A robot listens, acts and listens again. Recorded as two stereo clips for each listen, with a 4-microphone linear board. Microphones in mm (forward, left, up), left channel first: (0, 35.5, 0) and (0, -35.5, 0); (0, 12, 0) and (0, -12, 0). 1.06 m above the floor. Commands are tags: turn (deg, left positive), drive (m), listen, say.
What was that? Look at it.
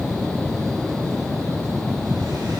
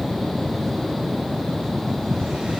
<listen/>
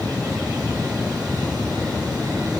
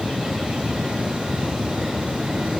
<listen/>
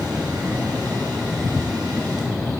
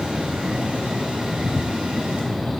<say>I can't make out anything.</say>